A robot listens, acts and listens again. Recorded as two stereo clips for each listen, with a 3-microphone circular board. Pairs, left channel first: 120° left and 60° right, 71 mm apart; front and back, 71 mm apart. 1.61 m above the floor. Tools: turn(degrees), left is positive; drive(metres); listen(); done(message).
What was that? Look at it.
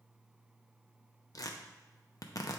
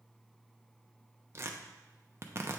turn(degrees=135)
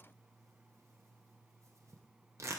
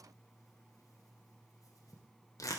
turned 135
turn(degrees=-25)
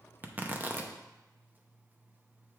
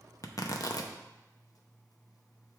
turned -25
done("Facing the tearing paper, under 1 m away.")